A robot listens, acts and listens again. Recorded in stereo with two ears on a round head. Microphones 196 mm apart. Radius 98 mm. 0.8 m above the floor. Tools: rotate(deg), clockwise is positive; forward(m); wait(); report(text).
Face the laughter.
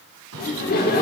rotate(-45)
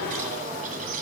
rotate(-100)
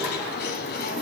wait()
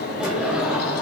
report("Facing the laughter, 2 to 4 m away.")